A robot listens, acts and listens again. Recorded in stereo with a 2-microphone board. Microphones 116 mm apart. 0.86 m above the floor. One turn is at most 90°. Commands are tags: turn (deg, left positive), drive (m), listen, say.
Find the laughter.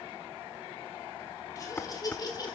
<turn deg="35"/>
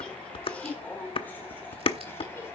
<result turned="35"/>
<turn deg="15"/>
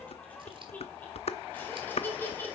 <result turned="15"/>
<turn deg="15"/>
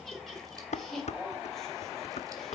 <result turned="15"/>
<say>Found it: laughter, straight ahead, over 4 m away.</say>